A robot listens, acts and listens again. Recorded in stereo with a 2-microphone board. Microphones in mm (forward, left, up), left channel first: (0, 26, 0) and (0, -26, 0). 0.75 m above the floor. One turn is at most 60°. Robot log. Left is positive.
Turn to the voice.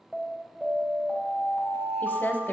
note: The woman speaking: about 45° left or 135° left.
cmd yaw +45
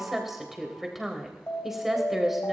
end: Facing the woman speaking, 2 to 4 m away.